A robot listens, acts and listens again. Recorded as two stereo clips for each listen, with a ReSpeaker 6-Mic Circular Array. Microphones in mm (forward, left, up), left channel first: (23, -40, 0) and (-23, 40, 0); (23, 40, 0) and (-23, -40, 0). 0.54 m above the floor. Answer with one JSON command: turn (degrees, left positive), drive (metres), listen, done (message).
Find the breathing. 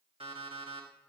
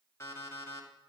{"listen": true}
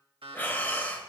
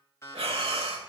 {"turn": -130}
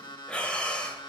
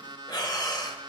{"turn": 20}
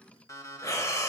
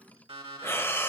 {"done": "Facing the breathing."}